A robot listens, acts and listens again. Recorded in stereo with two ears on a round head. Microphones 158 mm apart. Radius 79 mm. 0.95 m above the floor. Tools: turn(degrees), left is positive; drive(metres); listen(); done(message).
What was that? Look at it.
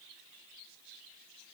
listen()
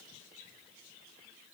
listen()
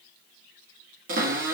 turn(degrees=-50)
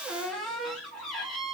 done("Facing the cupboard door, 1 to 2 m away.")